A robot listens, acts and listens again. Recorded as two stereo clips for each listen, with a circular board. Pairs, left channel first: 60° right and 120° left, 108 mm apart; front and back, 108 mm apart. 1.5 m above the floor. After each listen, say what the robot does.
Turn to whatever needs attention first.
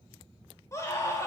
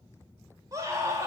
Turn 120° right.
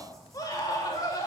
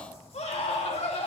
Found it: a scream, straight ahead.